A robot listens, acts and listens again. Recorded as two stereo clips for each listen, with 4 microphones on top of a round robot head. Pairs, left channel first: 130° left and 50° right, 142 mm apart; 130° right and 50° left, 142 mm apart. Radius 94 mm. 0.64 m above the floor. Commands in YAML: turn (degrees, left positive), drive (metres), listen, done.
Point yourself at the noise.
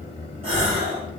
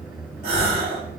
done: "Found it: a gasp, straight ahead."